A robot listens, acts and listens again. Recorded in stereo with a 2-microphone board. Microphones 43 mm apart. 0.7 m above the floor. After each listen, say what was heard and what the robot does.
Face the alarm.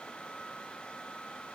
Keep listening.
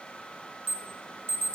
The alarm: about 65° right or 115° right. Turn 65° right.
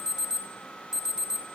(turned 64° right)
So it is at 10° right. Turn 10° right.
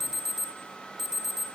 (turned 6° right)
Facing the alarm, 2 to 4 m away.